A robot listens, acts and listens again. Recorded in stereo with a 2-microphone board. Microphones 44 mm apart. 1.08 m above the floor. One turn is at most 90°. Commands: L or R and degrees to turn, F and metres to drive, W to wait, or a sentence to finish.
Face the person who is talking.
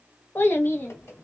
L50
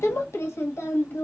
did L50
L80
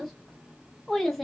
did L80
Found it: a child speaking, straight ahead.